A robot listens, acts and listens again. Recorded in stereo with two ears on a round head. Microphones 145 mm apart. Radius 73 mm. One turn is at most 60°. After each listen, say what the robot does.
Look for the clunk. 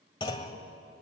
Turn 30° left.
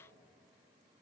Keep listening.
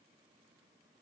I heard a clunk, but can't make it out now. It was about straight ahead or 120° left.